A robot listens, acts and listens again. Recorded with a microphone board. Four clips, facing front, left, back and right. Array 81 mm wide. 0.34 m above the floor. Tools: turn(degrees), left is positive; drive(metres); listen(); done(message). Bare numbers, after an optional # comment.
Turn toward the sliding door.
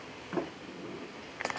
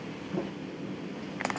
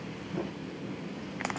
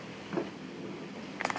# The sliding door: 30° right.
turn(-30)
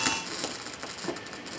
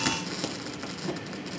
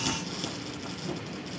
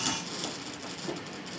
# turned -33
done("Facing the sliding door, 2 to 4 m away.")